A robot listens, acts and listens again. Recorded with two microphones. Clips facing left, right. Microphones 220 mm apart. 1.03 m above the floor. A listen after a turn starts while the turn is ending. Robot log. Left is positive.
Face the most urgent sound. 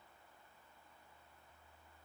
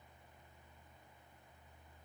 cmd idle
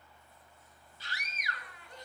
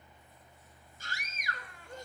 note: The scream: about 45° right or 135° right.
cmd yaw -45
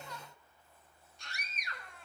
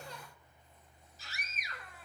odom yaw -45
end: Facing the scream.